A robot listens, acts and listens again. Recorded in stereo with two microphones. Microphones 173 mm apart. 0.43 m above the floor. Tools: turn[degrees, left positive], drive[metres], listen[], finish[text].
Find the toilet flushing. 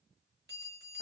Action: listen[]
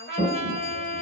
Thought: The toilet flushing: about 55° right or 125° right.
Action: turn[-55]
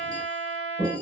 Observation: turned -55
Thought: So it is at 60° right.
Action: turn[-60]
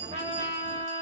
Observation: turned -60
Action: listen[]
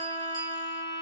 Action: listen[]
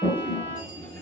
Thought: The toilet flushing is now 10° left.
Action: turn[10]
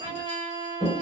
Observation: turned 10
Action: finish[Facing the toilet flushing.]